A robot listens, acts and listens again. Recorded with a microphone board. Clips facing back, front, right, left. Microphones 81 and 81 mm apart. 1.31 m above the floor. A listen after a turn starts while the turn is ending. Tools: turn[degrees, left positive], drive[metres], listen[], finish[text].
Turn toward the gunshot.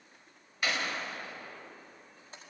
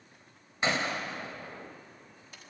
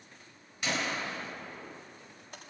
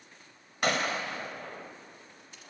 Thought: The gunshot: 60° left.
Action: turn[60]
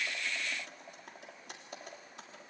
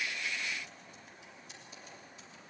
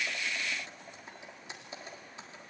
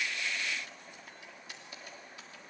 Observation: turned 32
Thought: Nothing new. It was at 30° left.
Action: turn[30]
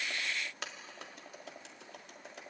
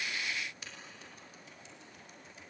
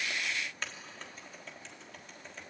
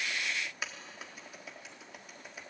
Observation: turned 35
Action: finish[I heard a gunshot from this way, but can't make it out now.]